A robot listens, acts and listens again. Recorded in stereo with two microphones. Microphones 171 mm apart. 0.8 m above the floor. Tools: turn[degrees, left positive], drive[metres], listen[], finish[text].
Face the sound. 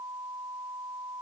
Action: listen[]
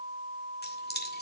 Thought: The keys jangling: about 70° left or 110° left.
Action: turn[70]
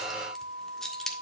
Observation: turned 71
Action: finish[Facing the keys jangling, 1 to 2 m away.]